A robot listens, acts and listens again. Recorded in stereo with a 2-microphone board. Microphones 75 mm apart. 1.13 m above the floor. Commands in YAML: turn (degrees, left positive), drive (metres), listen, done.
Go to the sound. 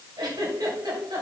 turn: -65
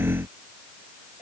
turn: -50
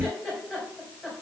drive: 1.0
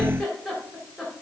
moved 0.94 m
drive: 1.0
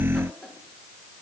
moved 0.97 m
drive: 1.0
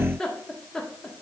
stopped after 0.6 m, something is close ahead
turn: 10
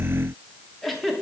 done: "I am next to the giggle."